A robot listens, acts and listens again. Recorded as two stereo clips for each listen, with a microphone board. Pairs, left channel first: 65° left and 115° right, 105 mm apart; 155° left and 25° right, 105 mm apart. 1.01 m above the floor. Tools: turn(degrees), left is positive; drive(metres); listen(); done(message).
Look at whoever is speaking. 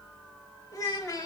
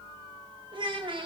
turn(degrees=10)
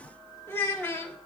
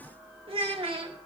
done("Found it: a child speaking, straight ahead, 1 to 2 m away.")